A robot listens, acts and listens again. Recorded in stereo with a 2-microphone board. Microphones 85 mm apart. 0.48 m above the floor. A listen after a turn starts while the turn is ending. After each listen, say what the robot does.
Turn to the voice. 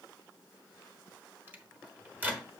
Keep listening.
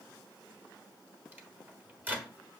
Keep listening.
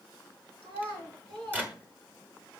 Turn 90° right.
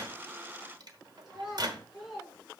Found it: a child speaking, straight ahead, 2 to 4 m away.